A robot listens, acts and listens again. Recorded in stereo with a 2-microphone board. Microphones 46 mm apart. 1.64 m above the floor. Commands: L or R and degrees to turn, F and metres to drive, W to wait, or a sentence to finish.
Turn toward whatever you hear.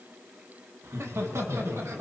R90
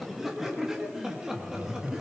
R15
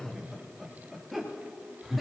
Facing the laughter, 2 to 4 m away.